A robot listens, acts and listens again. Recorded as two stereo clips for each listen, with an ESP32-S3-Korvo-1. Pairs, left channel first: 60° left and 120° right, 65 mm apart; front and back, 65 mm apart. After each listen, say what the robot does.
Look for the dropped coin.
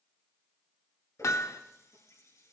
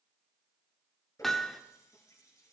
Keep listening.
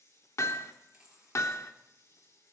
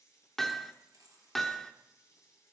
Turn 165° left.
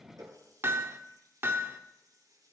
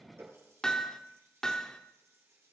Facing where the dropped coin came from. I can't hear it now.